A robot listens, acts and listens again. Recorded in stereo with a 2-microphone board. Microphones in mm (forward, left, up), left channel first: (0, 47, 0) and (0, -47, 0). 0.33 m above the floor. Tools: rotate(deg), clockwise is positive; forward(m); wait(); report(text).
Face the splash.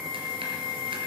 wait()
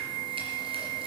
wait()
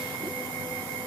report("I can't make out a splash to turn to.")